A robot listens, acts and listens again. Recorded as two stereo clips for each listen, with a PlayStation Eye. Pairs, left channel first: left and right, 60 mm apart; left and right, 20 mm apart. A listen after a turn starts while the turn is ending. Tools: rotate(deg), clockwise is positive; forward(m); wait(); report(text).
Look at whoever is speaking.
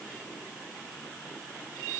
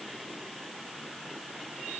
wait()
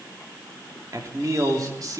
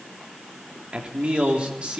rotate(90)
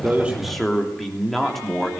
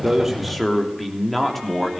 report("Facing the man speaking.")